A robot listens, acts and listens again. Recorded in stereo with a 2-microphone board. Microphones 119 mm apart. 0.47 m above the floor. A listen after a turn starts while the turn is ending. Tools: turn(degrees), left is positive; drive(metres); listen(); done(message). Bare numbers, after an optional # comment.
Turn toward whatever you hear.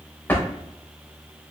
# The drawer: about 15° left or 165° left.
turn(15)
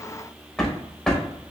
done("Facing the drawer.")